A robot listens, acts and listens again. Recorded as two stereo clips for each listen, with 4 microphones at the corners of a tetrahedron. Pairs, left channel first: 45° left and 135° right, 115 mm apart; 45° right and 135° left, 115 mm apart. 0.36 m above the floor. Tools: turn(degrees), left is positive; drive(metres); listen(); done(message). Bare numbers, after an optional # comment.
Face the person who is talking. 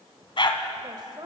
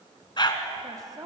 # The woman speaking: straight behind.
turn(180)
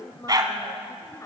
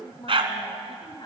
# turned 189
# The woman speaking is now 10° right.
turn(-10)
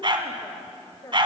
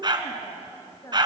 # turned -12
done("Found it: a woman speaking, straight ahead, 1 to 2 m away.")